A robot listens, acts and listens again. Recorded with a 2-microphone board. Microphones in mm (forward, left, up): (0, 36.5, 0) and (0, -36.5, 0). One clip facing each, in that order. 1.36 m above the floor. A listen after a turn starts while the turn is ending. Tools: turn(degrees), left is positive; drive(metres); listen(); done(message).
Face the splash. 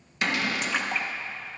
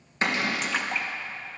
turn(degrees=30)
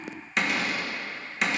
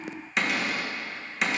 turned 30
listen()
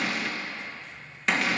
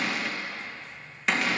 done("I heard a splash, but can't make it out now. It was about 30° right or 150° left.")